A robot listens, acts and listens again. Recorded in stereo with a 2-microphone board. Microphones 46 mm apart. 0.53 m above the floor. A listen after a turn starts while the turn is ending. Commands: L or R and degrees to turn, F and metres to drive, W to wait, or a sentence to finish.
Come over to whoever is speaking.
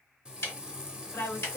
L45
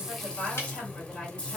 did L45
L10
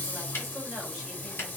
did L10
W
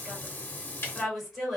F1.0
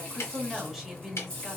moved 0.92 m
F1.0
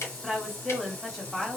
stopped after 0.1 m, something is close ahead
R10
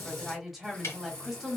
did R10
Arrived at the woman speaking, straight ahead.